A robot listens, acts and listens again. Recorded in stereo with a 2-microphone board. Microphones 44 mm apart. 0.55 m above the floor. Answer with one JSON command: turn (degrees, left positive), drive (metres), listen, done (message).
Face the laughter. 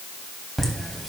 {"turn": 30}
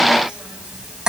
{"turn": -20}
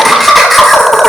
{"done": "Facing the laughter."}